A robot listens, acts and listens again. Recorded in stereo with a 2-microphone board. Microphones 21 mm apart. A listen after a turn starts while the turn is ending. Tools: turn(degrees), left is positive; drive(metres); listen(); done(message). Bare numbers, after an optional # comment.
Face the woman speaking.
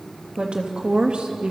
# The woman speaking: about 65° right or 115° right.
turn(-65)
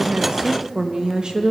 # So it is at 40° right.
turn(-40)
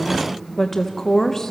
# The woman speaking is now 20° left.
turn(20)
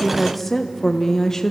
# The woman speaking is now 25° left.
turn(25)
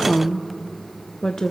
# The woman speaking is now 30° left.
turn(30)
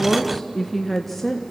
# The woman speaking is now 10° left.
turn(10)
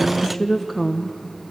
done("Found it: a woman speaking, straight ahead.")